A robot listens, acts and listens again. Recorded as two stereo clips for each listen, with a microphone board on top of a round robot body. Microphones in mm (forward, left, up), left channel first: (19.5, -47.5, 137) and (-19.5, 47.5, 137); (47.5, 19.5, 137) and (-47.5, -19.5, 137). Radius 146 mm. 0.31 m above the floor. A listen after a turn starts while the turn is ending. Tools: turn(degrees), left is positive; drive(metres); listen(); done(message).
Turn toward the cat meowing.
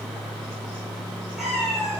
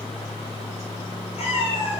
turn(degrees=20)
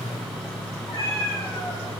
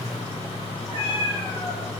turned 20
turn(degrees=-15)
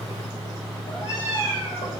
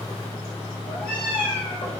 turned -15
turn(degrees=-15)
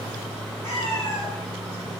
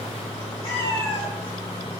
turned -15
done("Facing the cat meowing.")